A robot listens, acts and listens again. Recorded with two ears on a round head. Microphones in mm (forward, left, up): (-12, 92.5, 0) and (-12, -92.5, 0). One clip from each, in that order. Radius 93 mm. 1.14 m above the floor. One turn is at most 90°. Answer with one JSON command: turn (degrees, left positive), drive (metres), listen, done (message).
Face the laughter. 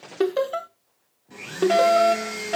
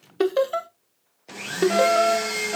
{"turn": -30}
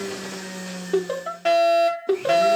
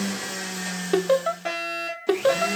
{"turn": -90}
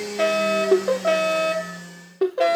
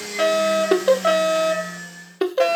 {"turn": -75}
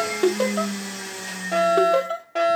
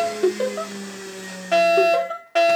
{"turn": 25}
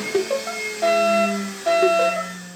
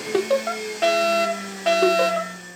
{"turn": -20}
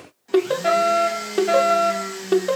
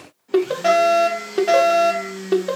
{"done": "Found it: laughter, straight ahead."}